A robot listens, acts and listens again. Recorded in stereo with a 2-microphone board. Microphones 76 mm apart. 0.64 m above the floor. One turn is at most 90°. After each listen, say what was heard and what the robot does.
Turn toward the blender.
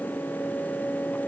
Keep listening.
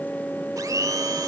The blender: about 55° right or 125° right. Turn 55° right.
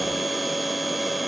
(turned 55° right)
Keep listening.
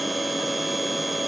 Keep listening.
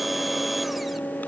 I heard a blender, but can't make it out now. It was about straight ahead or 70° right.